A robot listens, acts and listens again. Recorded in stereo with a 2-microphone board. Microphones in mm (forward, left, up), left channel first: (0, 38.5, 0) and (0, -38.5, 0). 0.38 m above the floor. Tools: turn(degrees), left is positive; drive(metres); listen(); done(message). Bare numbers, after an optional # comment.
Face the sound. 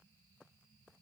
listen()
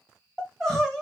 turn(30)
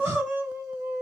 # So it is at 30° right.
turn(-30)
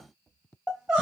# The crying is now 10° right.
turn(-10)
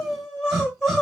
done("Found it: crying, straight ahead.")